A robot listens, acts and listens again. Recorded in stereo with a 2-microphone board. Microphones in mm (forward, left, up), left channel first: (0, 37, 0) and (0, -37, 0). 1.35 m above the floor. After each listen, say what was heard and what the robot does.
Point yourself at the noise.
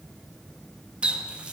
The running tap: about 15° right or 165° right. Turn 15° right.
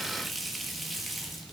Found it: a running tap, straight ahead, 1 to 2 m away.